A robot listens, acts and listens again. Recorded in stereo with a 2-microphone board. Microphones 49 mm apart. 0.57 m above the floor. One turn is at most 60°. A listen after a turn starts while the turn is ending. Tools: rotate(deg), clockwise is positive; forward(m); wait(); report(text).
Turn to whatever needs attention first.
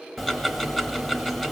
wait()
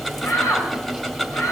rotate(-60)
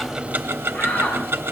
rotate(-35)
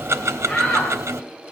rotate(-15)
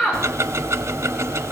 wait()
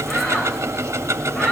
report("Found it: a shout, straight ahead, 2 to 4 m away.")